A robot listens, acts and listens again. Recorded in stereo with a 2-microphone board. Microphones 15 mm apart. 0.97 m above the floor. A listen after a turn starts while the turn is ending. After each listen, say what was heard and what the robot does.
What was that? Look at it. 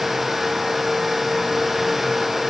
Keep listening.
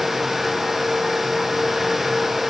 Keep listening.
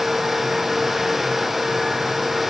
I can't make out anything to turn to.